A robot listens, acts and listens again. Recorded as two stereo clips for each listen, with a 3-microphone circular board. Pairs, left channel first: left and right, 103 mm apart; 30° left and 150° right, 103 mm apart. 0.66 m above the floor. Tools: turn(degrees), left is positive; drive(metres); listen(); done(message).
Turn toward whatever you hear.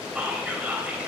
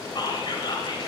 turn(degrees=-10)
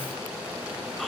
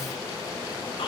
listen()
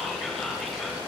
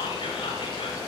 done("Found it: whispering, straight ahead, 2 to 4 m away.")